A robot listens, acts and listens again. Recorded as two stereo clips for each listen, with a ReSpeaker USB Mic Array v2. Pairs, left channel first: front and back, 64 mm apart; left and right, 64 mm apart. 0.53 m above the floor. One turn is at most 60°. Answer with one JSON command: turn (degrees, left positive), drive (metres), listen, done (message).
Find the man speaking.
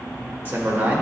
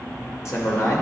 {"turn": 60}
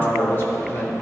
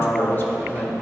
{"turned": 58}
{"turn": 35}
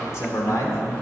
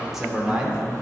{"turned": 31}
{"turn": -20}
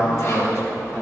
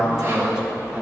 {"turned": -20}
{"turn": -30}
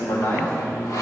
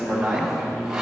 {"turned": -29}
{"turn": -10}
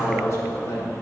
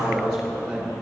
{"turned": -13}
{"done": "Found it: a man speaking, straight ahead, 1 to 2 m away."}